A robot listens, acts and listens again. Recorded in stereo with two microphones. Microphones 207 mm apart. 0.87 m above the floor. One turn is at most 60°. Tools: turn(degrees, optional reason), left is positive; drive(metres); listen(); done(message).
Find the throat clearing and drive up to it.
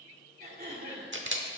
turn(degrees=-50, reason="The throat clearing: about 50° right or 130° right.")
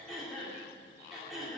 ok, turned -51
drive(metres=1.0)
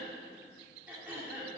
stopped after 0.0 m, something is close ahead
turn(degrees=-10, reason="The throat clearing is now 10° right.")
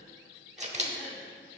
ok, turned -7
listen()
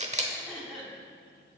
done("Something is in my way. I am facing the throat clearing but have not reached it.")